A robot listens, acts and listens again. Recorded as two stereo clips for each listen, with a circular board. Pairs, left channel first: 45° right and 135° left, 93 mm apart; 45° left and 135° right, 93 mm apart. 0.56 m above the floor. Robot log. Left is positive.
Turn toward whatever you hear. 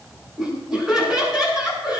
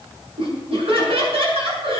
note: The laughter: 140° right.
cmd yaw -140
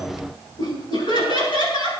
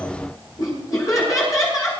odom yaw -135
note: The laughter is now 10° right.
cmd yaw -10
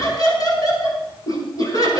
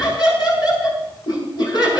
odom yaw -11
end: Found it: laughter, straight ahead.